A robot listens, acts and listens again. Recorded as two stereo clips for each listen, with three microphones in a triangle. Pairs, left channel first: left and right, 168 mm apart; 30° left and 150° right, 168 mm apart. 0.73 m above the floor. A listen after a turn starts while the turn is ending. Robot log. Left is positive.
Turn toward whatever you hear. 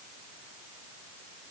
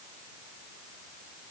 cmd idle
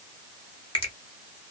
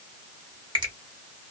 note: The finger snap: 150° left.
cmd yaw +150
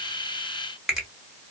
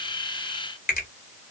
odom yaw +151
end: Found it: a finger snap, straight ahead, 1 to 2 m away.